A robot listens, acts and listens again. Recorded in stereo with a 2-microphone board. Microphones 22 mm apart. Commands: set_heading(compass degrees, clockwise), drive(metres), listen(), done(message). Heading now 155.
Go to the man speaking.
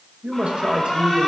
set_heading(215)
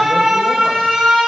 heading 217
listen()
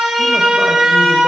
listen()
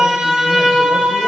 done("I heard a man speaking, but can't make it out now. It was about 5° left or 60° right. I did not reach it.")